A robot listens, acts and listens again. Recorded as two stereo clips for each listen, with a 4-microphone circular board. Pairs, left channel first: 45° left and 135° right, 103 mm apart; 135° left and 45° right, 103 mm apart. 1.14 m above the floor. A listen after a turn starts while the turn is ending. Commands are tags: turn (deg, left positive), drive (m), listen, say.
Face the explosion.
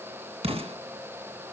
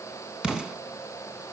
<turn deg="-130"/>
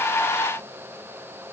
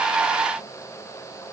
<say>Facing where the explosion came from. I can't hear it now.</say>